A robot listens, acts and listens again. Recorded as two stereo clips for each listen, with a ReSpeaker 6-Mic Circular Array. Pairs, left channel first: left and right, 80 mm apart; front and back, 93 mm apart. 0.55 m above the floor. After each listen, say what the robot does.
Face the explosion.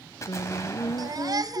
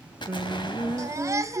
Turn 35° left.
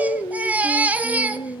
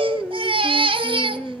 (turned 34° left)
Facing where the explosion came from. I can't hear it now.